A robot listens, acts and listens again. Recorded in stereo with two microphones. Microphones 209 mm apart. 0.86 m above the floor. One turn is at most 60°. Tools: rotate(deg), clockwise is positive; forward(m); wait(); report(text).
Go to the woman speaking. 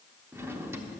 wait()
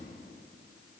wait()
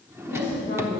rotate(-60)
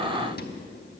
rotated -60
wait()
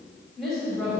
forward(1.0)
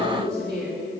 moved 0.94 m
forward(1.0)
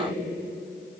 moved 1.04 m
rotate(-15)
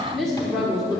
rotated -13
forward(1.0)
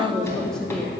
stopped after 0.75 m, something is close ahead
report("Arrived at the woman speaking, straight ahead.")